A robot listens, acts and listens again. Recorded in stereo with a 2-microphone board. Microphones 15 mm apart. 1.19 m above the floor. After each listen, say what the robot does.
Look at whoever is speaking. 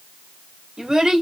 Turn 70° right.
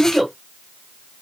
Found it: a child speaking, straight ahead, 2 to 4 m away.